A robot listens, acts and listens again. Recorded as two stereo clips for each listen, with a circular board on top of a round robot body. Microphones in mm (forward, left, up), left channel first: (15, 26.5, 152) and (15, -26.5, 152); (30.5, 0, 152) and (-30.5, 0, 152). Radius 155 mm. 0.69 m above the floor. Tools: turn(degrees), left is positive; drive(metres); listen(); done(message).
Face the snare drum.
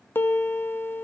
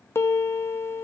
listen()
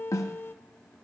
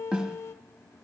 turn(degrees=105)
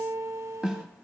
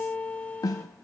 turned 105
turn(degrees=-10)
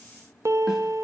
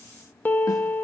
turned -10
listen()
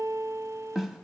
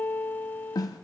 done("Facing the snare drum.")